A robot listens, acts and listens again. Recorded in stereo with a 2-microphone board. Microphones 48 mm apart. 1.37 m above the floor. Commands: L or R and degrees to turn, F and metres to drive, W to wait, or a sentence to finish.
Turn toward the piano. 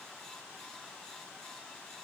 W
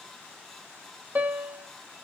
R35
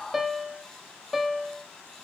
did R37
Found it: a piano, straight ahead, 1 to 2 m away.